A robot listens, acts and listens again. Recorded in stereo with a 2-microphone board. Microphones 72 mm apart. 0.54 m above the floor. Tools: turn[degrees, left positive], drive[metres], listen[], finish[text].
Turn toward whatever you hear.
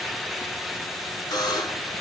Action: turn[90]
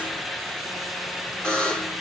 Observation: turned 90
Thought: So it is at 10° left.
Action: turn[10]
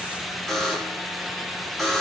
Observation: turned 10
Action: finish[Facing the buzzer.]